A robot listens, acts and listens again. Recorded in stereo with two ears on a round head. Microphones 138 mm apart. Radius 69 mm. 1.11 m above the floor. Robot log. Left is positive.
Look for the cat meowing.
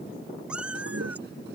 cmd yaw -30
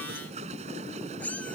note: So it is at 10° left.
cmd yaw +10
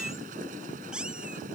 end: Facing the cat meowing.